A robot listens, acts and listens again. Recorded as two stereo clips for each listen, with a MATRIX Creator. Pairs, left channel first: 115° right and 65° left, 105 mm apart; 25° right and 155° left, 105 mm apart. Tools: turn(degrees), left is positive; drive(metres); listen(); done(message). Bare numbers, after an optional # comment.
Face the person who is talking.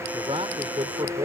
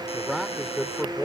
# The man speaking: 70° left.
turn(70)
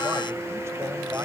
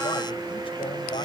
listen()
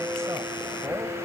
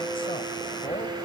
listen()
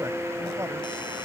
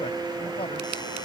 done("I heard a man speaking from this way, but can't make it out now.")